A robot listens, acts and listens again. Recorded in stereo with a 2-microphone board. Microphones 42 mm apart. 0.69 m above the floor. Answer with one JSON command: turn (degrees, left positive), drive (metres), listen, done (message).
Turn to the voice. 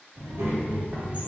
{"turn": -90}
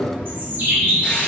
{"listen": true}
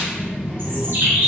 {"done": "Facing the child speaking, 2 to 4 m away."}